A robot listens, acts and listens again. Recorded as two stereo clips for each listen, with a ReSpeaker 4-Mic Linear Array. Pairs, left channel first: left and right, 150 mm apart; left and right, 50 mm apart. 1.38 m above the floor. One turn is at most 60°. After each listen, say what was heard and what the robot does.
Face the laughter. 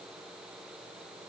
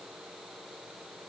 Keep listening.
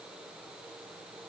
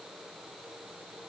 Keep listening.
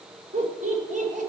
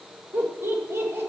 The laughter: about 60° right or 120° right. Turn 60° right.
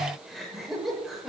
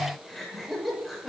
Facing the laughter, over 4 m away.